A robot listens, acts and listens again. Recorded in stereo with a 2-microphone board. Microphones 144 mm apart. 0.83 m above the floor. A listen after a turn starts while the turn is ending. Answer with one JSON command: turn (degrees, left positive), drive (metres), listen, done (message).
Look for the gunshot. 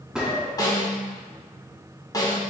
{"turn": -30}
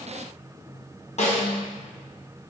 {"listen": true}
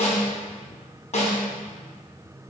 {"done": "I heard a gunshot, but can't make it out now. It was about 25° left or 145° right."}